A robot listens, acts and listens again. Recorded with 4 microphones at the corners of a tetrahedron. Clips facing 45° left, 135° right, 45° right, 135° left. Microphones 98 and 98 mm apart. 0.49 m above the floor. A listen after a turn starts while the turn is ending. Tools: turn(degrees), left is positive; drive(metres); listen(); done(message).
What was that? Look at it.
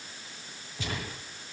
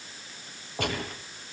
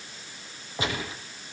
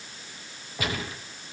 turn(degrees=-110)
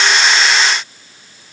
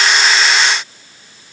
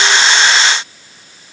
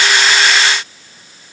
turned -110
done("Facing where the gunshot came from. I can't hear it now.")